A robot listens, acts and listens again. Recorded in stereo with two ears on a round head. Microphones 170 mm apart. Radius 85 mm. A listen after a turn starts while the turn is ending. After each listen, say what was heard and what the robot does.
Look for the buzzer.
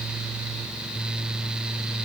Keep listening.
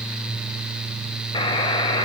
The buzzer: about 25° left or 155° left. Turn 25° left.
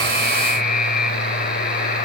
So it is at 130° left. Turn 130° left.
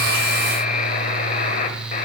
The buzzer is now 45° left. Turn 45° left.
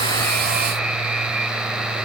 Facing the buzzer, 1 to 2 m away.